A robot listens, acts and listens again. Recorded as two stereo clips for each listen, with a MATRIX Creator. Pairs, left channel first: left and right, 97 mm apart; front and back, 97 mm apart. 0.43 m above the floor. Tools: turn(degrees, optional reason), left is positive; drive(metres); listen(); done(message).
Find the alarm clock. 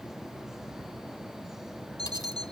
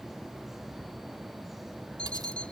turn(degrees=80, reason="The alarm clock: 80° left.")
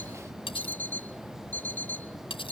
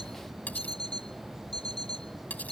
turn(degrees=20, reason="The alarm clock is now 20° left.")
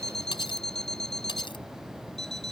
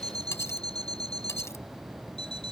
done("Found it: an alarm clock, straight ahead.")